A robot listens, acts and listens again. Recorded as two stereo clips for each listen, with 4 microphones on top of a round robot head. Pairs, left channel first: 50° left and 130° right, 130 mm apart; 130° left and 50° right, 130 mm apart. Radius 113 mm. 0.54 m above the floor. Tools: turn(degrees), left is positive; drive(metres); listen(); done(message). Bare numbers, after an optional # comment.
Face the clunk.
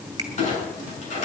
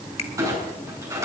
# The clunk: 20° left.
turn(20)
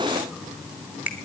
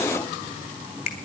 done("I heard a clunk from this way, but can't make it out now.")